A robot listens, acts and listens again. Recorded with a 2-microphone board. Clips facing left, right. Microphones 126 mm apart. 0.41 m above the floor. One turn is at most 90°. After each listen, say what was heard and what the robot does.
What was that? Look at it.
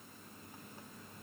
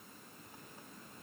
Keep listening.
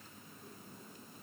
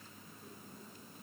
Keep listening.
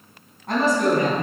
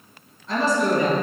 The woman speaking: about 60° left or 120° left. Turn 60° left.
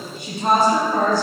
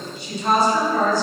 So it is at 55° left. Turn 55° left.
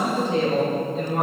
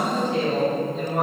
Facing the woman speaking, over 4 m away.